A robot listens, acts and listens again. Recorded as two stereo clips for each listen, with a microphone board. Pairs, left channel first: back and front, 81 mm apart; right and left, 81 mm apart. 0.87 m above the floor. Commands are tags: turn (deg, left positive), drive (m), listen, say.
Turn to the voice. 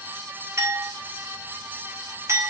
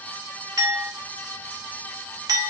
<listen/>
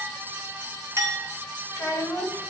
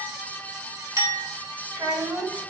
<turn deg="130"/>
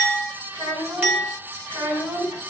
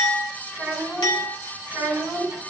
<turn deg="10"/>
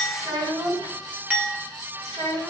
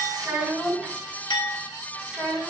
<say>Facing the child speaking.</say>